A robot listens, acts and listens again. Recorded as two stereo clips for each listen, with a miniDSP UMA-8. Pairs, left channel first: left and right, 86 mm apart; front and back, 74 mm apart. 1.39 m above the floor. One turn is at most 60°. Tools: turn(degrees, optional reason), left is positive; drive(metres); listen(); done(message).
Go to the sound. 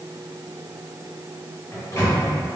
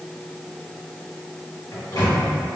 turn(degrees=35, reason="The microwave: 35° left.")
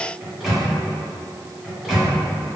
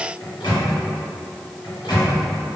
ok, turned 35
drive(metres=1.0)
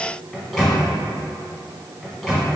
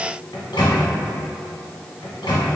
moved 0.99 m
drive(metres=1.0)
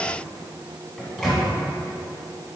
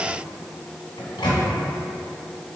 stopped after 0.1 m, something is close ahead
done("Arrived at the microwave, straight ahead.")